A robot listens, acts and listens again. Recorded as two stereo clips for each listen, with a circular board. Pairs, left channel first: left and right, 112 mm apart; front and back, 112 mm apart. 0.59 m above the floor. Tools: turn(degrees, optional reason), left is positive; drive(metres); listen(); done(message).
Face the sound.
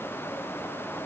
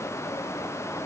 listen()
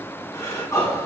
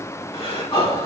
turn(degrees=30, reason="The breathing: 30° left.")
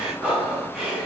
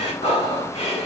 done("Found it: breathing, straight ahead.")